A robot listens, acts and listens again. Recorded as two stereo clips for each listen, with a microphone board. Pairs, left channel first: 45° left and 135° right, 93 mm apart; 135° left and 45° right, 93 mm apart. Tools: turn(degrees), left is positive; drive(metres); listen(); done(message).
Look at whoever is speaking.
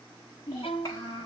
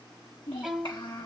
turn(degrees=100)
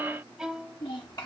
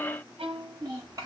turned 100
done("Facing the child speaking.")